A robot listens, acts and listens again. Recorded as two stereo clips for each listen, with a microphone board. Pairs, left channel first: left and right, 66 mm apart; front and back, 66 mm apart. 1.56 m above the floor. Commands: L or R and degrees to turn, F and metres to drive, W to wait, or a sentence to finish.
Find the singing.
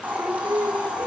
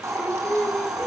R70
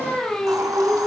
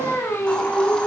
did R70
L15
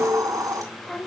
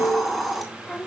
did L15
L40
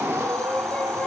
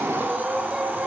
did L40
W
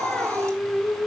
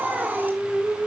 L135
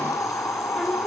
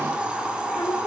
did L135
W
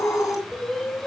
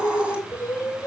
L10
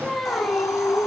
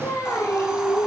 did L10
Facing the singing.